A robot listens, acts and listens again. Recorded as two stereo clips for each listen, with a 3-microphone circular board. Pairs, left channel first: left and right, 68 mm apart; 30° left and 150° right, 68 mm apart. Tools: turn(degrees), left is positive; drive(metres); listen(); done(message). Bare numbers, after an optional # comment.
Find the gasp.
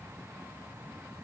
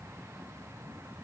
listen()
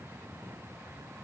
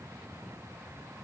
listen()
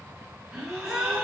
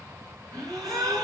# The gasp: 170° right.
turn(-170)
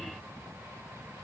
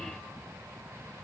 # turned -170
done("Facing where the gasp came from. I can't hear it now.")